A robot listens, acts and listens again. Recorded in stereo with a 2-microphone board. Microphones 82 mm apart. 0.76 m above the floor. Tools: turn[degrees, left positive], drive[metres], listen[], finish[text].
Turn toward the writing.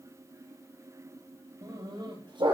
Action: listen[]
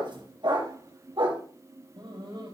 Action: listen[]
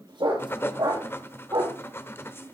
Thought: The writing: about 30° left or 150° left.
Action: turn[30]
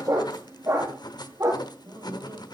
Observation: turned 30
Thought: So it is at 115° left.
Action: turn[115]
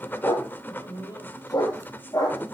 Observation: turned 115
Thought: The writing is now 25° left.
Action: turn[25]
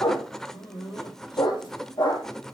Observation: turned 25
Action: finish[Facing the writing, under 1 m away.]